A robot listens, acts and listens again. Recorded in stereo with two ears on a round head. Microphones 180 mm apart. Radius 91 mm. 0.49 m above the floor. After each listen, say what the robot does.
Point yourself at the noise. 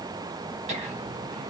Turn 35° right.
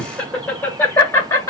Turn 15° left.
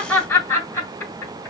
Turn 15° left.
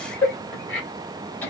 Turn 10° left.
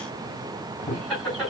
Facing the laughter.